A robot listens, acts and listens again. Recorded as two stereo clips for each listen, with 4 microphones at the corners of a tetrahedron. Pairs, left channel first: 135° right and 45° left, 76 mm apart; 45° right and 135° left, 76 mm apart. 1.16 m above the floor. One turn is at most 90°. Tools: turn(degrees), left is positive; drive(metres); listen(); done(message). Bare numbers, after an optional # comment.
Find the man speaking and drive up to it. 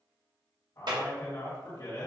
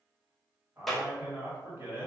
# The man speaking: 170° right.
turn(-90)
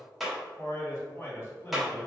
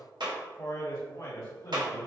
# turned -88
# The man speaking is now 80° right.
turn(-80)
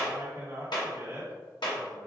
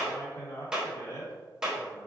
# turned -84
drive(1.0)
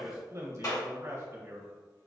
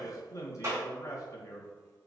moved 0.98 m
drive(1.0)
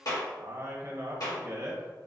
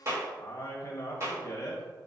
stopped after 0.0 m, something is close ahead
done("I am next to the man speaking.")